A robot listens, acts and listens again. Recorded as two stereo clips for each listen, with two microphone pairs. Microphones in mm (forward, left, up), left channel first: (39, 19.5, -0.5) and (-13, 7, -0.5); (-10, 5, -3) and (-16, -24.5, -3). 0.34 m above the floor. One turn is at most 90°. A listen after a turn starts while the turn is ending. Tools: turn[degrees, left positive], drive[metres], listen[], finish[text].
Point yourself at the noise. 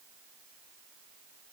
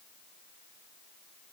Action: listen[]
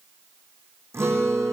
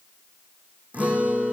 Thought: The guitar: 135° right.
Action: turn[-90]
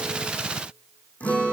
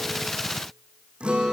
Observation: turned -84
Thought: The guitar is now 50° right.
Action: turn[-50]
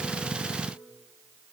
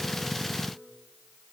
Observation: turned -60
Thought: Nothing new. It was at 10° left.
Action: turn[10]
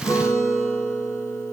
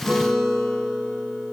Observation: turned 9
Action: finish[Found it: a guitar, straight ahead, over 4 m away.]